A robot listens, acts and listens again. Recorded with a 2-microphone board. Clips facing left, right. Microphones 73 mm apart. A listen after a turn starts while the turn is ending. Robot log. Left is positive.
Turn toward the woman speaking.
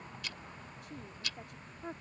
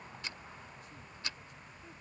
note: The woman speaking: about 70° left or 110° left.
cmd yaw +70
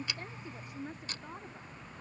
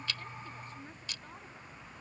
note: So it is at 20° left.
cmd yaw +20
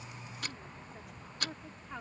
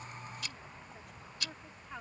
end: Facing the woman speaking.